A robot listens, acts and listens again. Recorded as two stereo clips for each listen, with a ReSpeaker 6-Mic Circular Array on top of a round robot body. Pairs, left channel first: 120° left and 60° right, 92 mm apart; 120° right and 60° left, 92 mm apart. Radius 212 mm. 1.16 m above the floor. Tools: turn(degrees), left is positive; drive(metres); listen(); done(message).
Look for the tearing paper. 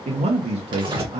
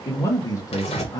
turn(degrees=-105)
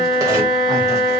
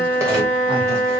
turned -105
listen()
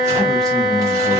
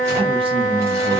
listen()
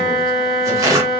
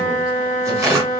done("Found it: tearing paper, straight ahead, 1 to 2 m away.")